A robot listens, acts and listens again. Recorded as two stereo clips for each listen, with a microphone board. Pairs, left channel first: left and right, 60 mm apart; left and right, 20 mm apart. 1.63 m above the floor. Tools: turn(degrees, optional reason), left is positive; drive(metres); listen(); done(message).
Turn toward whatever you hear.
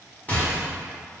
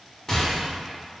turn(degrees=25, reason="The rattle: about 25° left or 155° left.")
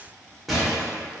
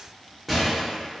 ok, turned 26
done("Found it: a rattle, straight ahead, under 1 m away.")